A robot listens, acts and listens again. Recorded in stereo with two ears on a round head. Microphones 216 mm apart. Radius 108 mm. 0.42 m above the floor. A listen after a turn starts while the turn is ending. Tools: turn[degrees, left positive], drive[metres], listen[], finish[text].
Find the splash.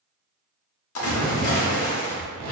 Thought: The splash: about 65° left or 115° left.
Action: turn[65]
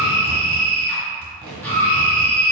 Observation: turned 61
Action: listen[]
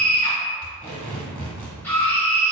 Action: finish[I heard a splash, but can't make it out now. It was about 5° left or 55° left.]